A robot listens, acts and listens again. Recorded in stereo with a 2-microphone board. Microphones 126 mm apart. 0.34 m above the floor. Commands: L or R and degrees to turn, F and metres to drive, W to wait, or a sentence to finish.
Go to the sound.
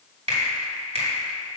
R60
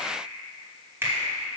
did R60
R20
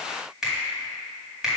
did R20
F1.0
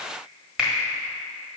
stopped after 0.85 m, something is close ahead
I am next to the finger snap.